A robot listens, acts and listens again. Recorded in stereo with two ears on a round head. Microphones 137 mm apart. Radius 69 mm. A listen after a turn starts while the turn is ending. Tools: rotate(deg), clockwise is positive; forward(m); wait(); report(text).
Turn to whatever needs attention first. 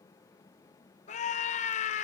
rotate(-50)
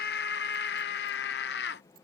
rotate(-80)
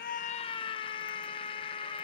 rotate(-35)
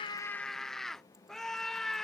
report("Facing the scream.")